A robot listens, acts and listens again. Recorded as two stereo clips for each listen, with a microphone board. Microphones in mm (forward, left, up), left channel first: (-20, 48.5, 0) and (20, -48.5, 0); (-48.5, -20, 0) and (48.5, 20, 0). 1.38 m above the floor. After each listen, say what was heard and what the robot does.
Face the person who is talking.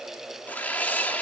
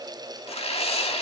Keep listening.
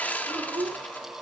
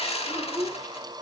The child speaking: 30° right. Turn 30° right.
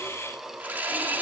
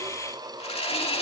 Keep listening.
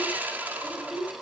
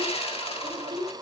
The child speaking is now 20° left. Turn 20° left.
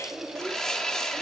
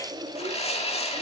Facing the child speaking.